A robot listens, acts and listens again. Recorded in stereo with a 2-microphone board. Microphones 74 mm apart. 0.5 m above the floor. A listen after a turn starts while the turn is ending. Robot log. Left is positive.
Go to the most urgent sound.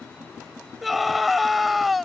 cmd yaw +30
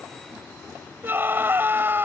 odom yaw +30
note: So it is at 30° right.
cmd yaw -30
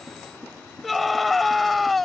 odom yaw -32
cmd fwd 1.0
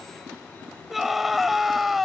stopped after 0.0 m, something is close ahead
end: Blocked. The scream is further on, straight ahead.